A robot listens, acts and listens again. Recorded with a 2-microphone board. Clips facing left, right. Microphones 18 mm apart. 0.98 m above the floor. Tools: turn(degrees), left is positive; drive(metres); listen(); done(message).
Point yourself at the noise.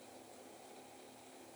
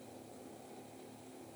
listen()
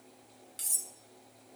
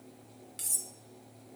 turn(degrees=30)
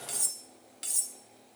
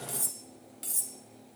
turn(degrees=150)
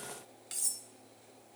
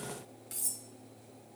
turn(degrees=30)
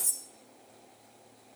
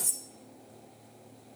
done("Found it: cutlery clinking, straight ahead.")